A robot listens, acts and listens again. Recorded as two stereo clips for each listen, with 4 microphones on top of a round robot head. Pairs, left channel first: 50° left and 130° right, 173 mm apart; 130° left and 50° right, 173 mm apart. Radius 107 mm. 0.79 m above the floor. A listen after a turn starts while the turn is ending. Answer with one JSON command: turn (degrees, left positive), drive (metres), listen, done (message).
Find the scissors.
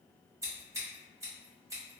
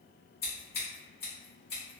{"turn": 160}
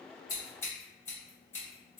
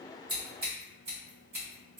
{"turn": -25}
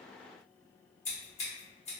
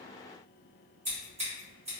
{"done": "Found it: scissors, straight ahead, 1 to 2 m away."}